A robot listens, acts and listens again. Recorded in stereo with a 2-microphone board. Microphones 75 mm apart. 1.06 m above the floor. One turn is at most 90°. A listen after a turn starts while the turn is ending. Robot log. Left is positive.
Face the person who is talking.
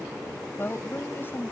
note: The woman speaking: about 35° left or 145° left.
cmd yaw +35
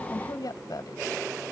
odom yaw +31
note: So it is at 115° left.
cmd yaw +90
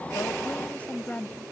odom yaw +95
note: The woman speaking is now 20° left.
cmd yaw +20
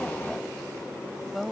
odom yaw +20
end: Facing the woman speaking.